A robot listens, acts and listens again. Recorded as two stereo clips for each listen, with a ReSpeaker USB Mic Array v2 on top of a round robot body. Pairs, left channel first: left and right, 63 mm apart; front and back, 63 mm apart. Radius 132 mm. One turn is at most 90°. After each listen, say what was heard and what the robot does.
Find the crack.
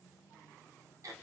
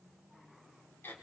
Keep listening.
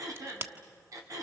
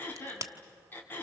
The crack: 140° right. Turn 90° right.
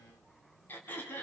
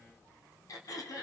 Nothing new. It was at 50° right. Turn 50° right.
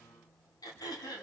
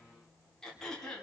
Facing where the crack came from. I can't hear it now.